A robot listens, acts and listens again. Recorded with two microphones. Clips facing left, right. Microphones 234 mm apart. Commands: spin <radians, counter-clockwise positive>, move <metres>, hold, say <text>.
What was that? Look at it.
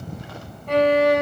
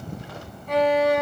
spin 1.22
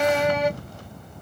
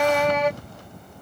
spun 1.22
spin 0.26
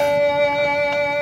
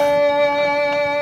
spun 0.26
say Facing the violin.